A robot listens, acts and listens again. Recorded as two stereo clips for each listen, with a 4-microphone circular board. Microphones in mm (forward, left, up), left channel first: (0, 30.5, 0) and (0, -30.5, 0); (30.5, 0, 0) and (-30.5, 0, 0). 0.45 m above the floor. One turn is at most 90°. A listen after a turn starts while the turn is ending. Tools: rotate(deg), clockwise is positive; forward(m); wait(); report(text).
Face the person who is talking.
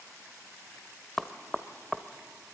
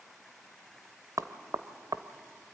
wait()
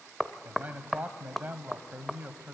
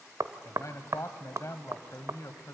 rotate(30)
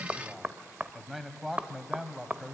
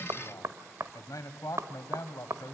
report("Facing the man speaking.")